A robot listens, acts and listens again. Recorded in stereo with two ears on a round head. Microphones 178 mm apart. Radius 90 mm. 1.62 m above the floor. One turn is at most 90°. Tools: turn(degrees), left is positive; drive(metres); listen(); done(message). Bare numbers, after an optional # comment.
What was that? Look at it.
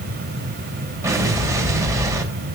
# The explosion: about 15° right or 165° right.
turn(-15)
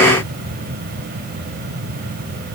listen()
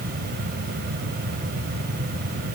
done("I heard an explosion, but can't make it out now. It was about straight ahead or 150° right.")